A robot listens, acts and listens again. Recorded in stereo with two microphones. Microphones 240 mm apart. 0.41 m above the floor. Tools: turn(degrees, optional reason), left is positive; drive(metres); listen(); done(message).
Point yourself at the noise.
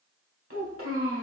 turn(degrees=-60, reason="The child speaking: about 60° right or 120° right.")
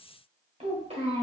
turn(degrees=-30, reason="So it is at 30° right.")
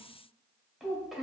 done("Found it: a child speaking, straight ahead, 1 to 2 m away.")